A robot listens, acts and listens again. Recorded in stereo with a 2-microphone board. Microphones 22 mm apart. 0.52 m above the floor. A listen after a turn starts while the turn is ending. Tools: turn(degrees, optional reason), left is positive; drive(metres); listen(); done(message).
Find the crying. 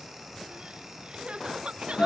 turn(degrees=-55, reason="The crying: about 55° right or 125° right.")
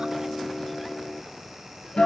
listen()
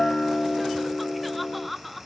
done("Facing the crying, 1 to 2 m away.")